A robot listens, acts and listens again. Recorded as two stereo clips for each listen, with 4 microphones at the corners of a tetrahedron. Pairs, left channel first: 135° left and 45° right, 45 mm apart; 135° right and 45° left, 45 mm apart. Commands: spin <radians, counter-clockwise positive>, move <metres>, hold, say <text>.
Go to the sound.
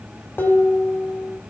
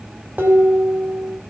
spin 1.66
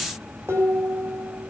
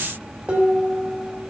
spin -0.26
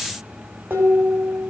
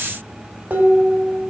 move 1.0
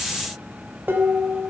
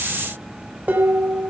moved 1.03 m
move 1.0
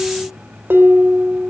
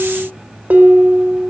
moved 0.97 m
move 1.0
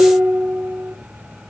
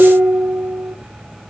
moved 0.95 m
move 1.0
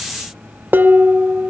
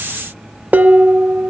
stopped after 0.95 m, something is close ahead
say I am next to the dishes clattering.